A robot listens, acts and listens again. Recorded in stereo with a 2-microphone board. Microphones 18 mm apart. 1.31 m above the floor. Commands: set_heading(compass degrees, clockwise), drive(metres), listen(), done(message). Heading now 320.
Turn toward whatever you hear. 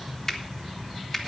set_heading(295)
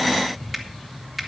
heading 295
done("Facing the finger snap, 1 to 2 m away.")